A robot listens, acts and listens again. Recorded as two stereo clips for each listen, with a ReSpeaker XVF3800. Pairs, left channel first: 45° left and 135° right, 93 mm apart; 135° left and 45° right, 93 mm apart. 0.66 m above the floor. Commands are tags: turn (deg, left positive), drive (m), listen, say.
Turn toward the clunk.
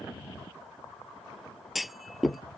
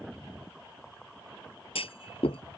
<turn deg="135"/>
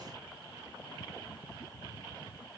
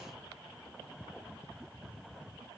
<say>I heard a clunk from this way, but can't make it out now.</say>